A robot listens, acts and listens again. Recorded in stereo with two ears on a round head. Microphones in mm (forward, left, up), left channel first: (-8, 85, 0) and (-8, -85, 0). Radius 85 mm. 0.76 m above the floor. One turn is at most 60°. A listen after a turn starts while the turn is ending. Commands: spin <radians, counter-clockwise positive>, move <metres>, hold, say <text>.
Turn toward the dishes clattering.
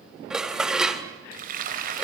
spin -0.52
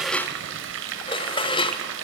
spin 0.44
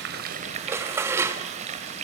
spin -0.26
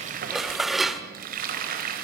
say Facing the dishes clattering.